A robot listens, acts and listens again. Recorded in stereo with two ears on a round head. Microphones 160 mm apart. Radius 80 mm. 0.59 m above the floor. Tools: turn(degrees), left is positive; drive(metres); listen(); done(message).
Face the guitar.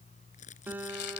turn(degrees=-30)
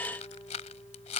listen()
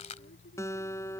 turn(degrees=15)
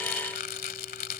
listen()
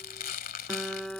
done("Facing the guitar.")